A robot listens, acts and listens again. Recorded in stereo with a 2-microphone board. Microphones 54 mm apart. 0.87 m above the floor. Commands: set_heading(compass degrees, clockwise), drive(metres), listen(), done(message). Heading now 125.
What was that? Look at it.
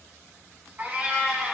set_heading(155)
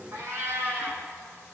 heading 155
set_heading(280)
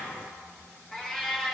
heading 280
set_heading(270)
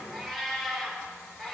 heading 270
done("Found it: a cat meowing, straight ahead, over 4 m away.")